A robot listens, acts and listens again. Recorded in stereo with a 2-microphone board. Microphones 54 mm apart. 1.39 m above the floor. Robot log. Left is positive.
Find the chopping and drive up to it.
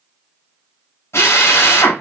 cmd idle
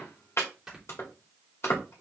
note: The chopping: about 65° left or 115° left.
cmd yaw +65
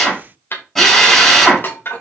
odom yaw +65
note: So it is at 50° left.
cmd yaw +50
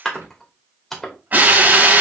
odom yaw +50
cmd fwd 1.0
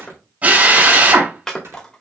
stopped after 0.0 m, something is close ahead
note: The chopping is now 10° left.
cmd yaw +10
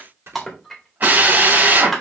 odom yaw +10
end: Something is in my way. I am facing the chopping but have not reached it.